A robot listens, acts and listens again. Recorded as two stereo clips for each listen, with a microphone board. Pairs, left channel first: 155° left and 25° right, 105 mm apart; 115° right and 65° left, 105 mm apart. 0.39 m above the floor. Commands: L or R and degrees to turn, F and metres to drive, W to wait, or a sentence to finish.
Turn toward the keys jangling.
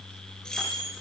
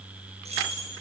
L75
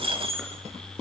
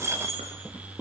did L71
Found it: keys jangling, straight ahead.